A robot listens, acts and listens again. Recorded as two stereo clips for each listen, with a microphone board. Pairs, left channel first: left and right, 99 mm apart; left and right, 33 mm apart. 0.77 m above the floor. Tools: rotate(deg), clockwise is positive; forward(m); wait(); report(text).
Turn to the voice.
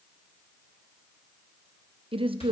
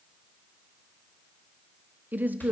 rotate(60)
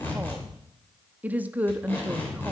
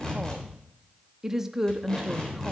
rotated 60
rotate(20)
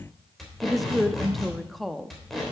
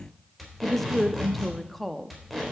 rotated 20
report("Facing the woman speaking.")